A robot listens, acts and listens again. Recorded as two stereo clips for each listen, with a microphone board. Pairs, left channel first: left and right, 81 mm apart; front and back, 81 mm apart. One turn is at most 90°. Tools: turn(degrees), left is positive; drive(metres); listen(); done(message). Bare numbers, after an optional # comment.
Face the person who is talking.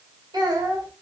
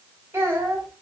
# The child speaking: 125° right.
turn(-90)
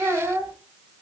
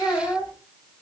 # The child speaking is now 30° right.
turn(-30)
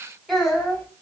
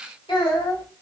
done("Facing the child speaking, 2 to 4 m away.")